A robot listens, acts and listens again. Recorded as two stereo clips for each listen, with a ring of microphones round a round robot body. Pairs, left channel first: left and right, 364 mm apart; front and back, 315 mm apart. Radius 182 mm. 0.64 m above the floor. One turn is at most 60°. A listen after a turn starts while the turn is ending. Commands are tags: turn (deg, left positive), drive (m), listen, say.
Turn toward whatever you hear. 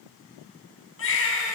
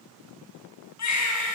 <turn deg="35"/>
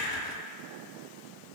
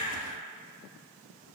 <listen/>
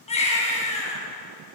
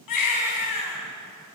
<turn deg="15"/>
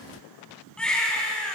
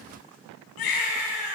<say>Facing the baby crying, over 4 m away.</say>